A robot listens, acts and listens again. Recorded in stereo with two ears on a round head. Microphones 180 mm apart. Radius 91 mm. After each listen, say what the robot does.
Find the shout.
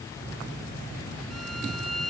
Keep listening.
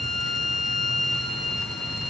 Keep listening.
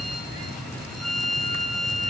I can't make out a shout, only a violin.